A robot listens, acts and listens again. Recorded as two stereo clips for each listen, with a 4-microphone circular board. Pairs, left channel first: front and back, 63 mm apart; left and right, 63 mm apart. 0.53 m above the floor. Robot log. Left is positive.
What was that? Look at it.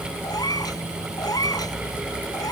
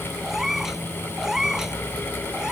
note: The cat meowing: 10° right.
cmd yaw -10
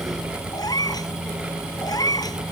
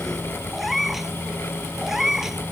end: Found it: a cat meowing, straight ahead.